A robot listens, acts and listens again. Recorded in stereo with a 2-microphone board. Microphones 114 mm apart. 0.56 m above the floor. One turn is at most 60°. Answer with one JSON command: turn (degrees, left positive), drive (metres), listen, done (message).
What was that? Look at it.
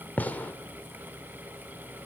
{"turn": 30}
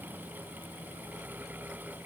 {"listen": true}
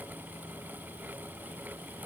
{"done": "I heard a gunshot, but can't make it out now. It was about 15° right or 135° left."}